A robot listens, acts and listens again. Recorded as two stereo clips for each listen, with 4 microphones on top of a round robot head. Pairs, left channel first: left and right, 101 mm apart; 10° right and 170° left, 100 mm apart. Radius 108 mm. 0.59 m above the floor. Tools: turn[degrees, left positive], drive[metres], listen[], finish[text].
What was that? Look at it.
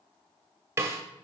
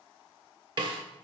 Thought: The snare drum: 150° right.
Action: turn[-150]
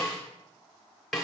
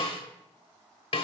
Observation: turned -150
Action: finish[Facing the snare drum.]